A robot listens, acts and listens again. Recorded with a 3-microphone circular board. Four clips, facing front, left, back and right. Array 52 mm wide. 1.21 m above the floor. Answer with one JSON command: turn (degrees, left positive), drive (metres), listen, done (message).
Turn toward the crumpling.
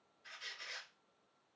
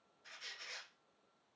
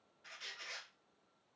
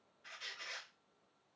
{"listen": true}
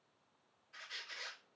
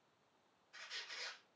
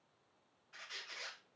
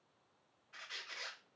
{"listen": true}
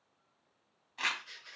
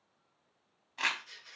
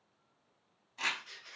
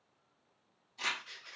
{"turn": 70}
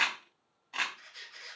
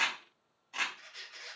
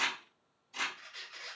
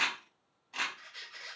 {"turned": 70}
{"done": "Facing the crumpling, under 1 m away."}